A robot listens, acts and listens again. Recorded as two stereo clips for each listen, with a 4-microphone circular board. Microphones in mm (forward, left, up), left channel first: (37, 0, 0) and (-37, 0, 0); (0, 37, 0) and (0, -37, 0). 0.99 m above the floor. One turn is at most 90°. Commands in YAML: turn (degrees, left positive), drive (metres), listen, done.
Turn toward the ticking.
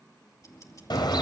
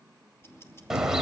turn: 40
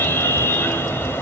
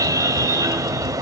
listen: true
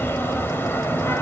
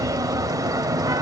listen: true
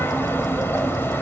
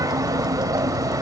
done: "I heard ticking from this way, but can't make it out now."